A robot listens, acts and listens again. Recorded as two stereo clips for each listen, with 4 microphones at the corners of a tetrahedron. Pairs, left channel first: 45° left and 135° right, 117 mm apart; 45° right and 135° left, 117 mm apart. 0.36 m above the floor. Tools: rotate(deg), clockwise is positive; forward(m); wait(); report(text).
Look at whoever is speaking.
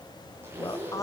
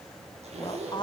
rotate(10)
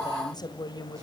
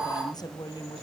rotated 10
report("Facing the woman speaking.")